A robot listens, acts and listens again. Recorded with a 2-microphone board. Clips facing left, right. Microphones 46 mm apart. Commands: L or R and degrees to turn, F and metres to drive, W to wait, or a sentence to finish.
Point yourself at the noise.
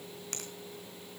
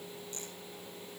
W
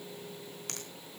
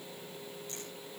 W
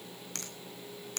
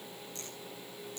L75
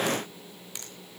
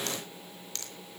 L15
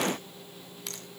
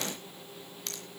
Facing the finger snap.